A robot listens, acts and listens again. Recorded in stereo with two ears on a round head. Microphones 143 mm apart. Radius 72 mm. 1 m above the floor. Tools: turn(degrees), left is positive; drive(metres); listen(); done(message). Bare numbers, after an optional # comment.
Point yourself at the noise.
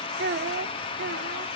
turn(-90)
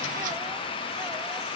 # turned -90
listen()
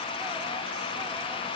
listen()
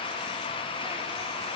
done("I heard a child speaking from this way, but can't make it out now.")